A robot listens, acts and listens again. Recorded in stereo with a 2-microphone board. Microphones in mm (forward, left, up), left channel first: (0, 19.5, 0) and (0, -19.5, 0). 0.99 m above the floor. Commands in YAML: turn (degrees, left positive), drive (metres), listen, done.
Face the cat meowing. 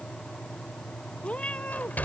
turn: 25
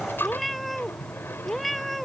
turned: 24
done: "Facing the cat meowing."